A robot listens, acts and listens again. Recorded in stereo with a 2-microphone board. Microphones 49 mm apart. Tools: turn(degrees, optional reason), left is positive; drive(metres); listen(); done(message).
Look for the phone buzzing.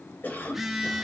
turn(degrees=-30)
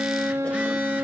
listen()
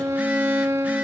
listen()
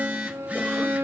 turn(degrees=-145, reason="So it is at 145° right.")
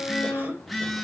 done("Facing the phone buzzing.")